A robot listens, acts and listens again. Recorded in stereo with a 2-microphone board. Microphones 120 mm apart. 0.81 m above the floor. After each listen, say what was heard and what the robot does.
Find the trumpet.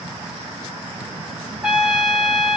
Turn 30° right.
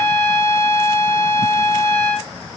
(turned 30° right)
So it is at 20° left. Turn 20° left.
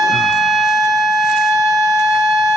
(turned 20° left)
Facing the trumpet, under 1 m away.